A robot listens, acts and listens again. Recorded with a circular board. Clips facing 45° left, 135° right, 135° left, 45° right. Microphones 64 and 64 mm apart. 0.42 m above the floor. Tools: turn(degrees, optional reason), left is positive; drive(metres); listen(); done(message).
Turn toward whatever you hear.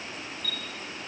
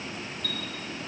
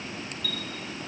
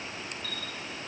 turn(degrees=-100, reason="The chime: 100° right.")
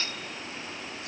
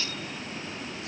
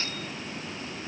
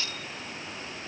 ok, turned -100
listen()
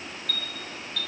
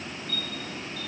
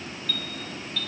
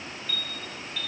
turn(degrees=30, reason="The chime is now 30° left.")
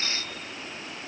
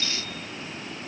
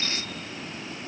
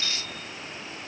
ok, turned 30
done("Facing the chime, over 4 m away.")